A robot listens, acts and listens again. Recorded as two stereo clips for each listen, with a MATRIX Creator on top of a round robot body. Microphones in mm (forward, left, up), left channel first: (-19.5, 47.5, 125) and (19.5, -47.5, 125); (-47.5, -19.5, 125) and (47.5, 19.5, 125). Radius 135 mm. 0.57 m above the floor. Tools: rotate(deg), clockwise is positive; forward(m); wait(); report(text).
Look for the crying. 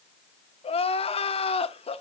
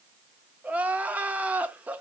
rotate(-100)
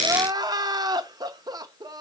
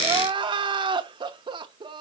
rotate(15)
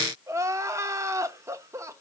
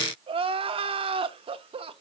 report("Facing the crying.")